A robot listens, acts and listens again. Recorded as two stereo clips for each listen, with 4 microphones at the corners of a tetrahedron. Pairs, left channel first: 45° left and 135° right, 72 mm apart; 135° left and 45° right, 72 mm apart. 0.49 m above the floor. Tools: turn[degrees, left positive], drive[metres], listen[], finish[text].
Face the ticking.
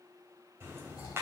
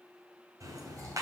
Thought: The ticking: 80° right.
Action: turn[-80]
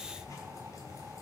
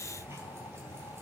Action: finish[Facing the ticking, 2 to 4 m away.]